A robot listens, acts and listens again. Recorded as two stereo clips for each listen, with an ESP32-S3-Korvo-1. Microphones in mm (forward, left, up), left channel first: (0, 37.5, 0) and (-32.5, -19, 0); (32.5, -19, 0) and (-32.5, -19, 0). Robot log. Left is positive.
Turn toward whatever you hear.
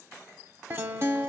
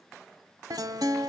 note: The guitar: 170° right.
cmd yaw -170
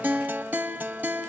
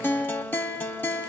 note: The guitar is now 55° right.
cmd yaw -55
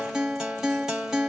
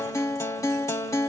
note: The guitar is now 35° right.
cmd yaw -35
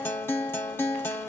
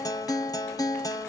note: The guitar is now 10° left.
cmd yaw +10
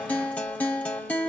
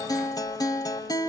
end: Facing the guitar.